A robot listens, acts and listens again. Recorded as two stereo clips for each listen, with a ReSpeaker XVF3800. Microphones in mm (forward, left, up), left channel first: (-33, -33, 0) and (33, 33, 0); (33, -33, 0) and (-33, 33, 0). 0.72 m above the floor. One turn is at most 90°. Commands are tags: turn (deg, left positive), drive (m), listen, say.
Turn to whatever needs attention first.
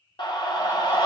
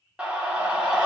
<turn deg="-90"/>
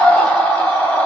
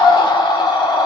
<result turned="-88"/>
<turn deg="-60"/>
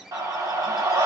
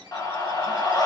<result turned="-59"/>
<say>Facing the scream, 1 to 2 m away.</say>